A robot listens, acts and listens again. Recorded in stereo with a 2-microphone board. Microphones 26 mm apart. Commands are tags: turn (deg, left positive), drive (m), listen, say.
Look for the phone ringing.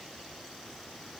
<listen/>
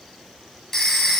<turn deg="30"/>
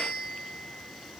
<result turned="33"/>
<listen/>
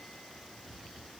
<listen/>
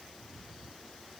<say>I heard a phone ringing, but can't make it out now. It was about 20° right or 130° left.</say>